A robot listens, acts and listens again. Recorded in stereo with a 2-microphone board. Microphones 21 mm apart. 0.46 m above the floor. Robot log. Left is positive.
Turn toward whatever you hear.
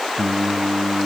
cmd yaw +30
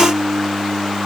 note: So it is at 40° right.
cmd yaw -40
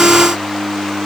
end: Found it: singing, straight ahead, 2 to 4 m away.